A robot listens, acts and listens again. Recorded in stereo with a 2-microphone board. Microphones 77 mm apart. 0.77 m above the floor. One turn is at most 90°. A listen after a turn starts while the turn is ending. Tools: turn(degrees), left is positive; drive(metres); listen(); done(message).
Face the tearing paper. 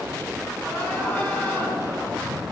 listen()
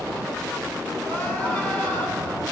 listen()
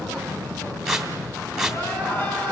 turn(degrees=-30)
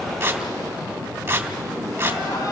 turn(degrees=-90)
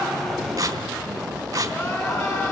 turn(degrees=-60)
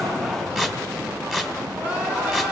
done("Facing the tearing paper, 1 to 2 m away.")